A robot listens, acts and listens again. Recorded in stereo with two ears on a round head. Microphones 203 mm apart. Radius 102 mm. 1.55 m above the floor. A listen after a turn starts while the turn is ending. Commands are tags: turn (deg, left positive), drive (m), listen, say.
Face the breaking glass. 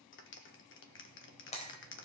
<turn deg="30"/>
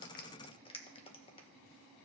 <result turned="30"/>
<listen/>
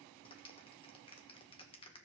<say>I heard breaking glass, but can't make it out now. It was about straight ahead or 120° left.</say>